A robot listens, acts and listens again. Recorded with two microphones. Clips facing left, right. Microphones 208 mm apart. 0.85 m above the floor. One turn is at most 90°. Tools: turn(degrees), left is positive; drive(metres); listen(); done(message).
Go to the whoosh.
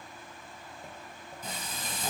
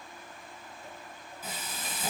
listen()
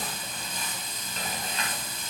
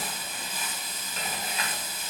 listen()
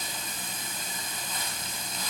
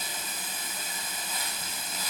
done("I can't make out a whoosh to turn to.")